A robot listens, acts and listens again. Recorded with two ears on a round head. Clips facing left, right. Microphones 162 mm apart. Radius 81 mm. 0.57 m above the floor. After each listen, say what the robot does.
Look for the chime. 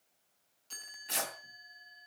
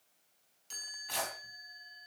Turn 30° right.
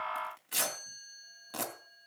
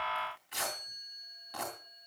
Turn 15° left.
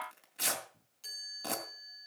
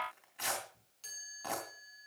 Facing the chime, over 4 m away.